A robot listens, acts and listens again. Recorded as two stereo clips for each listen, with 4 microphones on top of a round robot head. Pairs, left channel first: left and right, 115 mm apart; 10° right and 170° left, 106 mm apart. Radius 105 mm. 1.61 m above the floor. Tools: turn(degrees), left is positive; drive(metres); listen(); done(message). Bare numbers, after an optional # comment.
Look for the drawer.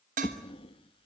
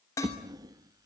# The drawer: 125° left.
turn(125)
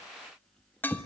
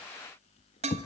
done("Found it: a drawer, straight ahead.")